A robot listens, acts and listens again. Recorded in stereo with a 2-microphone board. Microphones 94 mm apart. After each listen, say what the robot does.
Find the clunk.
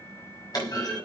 Turn 45° left.
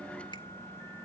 Keep listening.
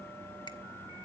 I heard a clunk, but can't make it out now. It was about straight ahead or 90° left.